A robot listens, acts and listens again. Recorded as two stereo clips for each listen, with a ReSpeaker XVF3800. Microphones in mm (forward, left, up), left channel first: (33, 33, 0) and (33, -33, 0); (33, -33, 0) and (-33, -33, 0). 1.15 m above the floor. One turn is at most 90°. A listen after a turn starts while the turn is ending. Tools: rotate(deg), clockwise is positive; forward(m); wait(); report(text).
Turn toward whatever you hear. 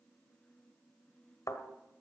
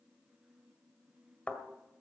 rotate(-70)
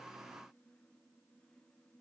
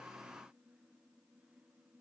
report("Facing where the thud came from. I can't hear it now.")